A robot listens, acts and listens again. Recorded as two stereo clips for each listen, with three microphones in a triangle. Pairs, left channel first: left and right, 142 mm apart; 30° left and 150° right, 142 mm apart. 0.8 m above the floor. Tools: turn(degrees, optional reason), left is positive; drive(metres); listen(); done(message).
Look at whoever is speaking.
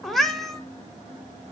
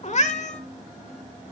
listen()
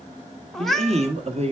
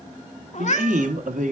turn(degrees=-130, reason="The man speaking: 130° right.")
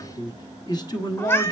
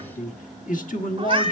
turn(degrees=30, reason="The man speaking is now 30° left.")
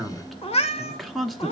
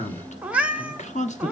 done("Facing the man speaking, 1 to 2 m away.")